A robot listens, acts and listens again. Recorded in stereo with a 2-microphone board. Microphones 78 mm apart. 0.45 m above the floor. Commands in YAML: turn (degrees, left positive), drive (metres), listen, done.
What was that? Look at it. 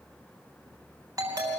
turn: -40
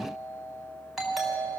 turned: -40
done: "Found it: a doorbell, straight ahead."